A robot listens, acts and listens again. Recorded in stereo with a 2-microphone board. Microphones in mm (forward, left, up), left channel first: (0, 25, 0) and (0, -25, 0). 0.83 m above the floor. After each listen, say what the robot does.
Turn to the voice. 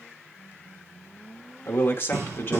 Turn 40° left.
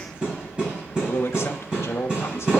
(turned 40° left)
Turn 90° left.
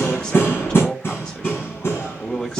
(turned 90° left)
Turn 20° left.
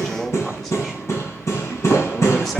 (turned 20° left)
Facing the man speaking, 1 to 2 m away.